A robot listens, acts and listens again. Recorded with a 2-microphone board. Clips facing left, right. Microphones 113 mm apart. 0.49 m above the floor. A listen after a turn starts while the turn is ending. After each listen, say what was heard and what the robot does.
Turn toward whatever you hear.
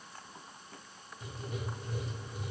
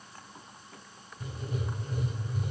The writing: about 45° right or 135° right. Turn 45° right.
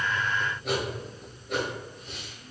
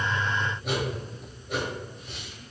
Facing the writing.